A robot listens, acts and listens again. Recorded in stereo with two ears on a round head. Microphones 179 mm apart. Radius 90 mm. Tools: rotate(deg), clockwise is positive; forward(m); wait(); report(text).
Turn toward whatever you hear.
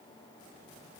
wait()
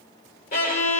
rotate(-45)
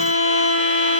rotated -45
rotate(-80)
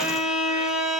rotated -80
report("Found it: a violin, straight ahead, 2 to 4 m away.")